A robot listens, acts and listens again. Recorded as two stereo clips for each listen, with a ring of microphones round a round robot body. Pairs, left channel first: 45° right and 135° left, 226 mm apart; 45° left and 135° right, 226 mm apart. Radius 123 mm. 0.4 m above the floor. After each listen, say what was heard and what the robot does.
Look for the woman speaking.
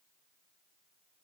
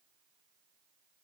Keep listening.
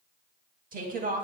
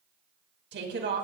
The woman speaking: 175° right. Turn 175° right.
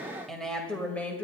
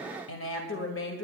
The woman speaking is now 35° left. Turn 35° left.
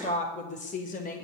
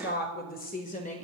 Facing the woman speaking.